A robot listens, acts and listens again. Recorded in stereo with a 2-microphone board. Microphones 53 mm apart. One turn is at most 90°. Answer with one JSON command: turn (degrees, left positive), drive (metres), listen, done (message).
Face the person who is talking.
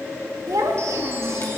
{"turn": -90}
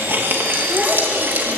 {"listen": true}
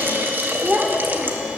{"turn": -25}
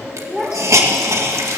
{"done": "Facing the child speaking, over 4 m away."}